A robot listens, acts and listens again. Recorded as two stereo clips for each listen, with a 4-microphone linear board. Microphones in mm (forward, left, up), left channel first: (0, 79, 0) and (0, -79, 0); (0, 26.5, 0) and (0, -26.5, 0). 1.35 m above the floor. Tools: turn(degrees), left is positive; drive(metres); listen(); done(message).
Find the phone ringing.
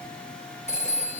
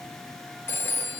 turn(degrees=45)
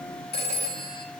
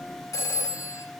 turn(degrees=90)
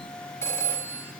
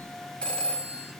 turn(degrees=15)
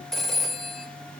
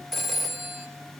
done("Facing the phone ringing, 2 to 4 m away.")